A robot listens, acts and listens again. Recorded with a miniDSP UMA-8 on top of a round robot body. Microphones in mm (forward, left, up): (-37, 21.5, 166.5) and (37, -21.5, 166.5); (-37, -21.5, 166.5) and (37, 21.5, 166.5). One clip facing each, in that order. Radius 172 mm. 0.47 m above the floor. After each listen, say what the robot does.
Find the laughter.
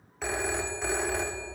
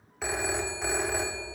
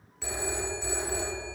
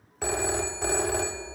Keep listening.
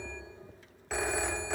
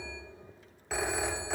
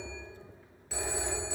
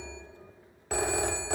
Keep listening.
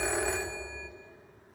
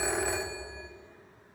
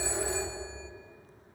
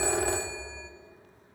I can't make out laughter, only a phone ringing.